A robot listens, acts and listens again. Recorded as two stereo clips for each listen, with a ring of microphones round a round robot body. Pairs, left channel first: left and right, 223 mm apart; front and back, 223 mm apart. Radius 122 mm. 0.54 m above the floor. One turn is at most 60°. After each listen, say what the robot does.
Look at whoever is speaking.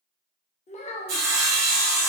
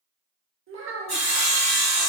Turn 60° left.
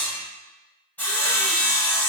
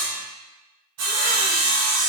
Turn 60° left.
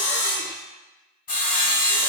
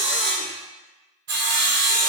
Turn 30° left.
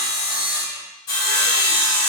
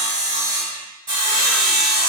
I heard a child speaking from this way, but can't make it out now.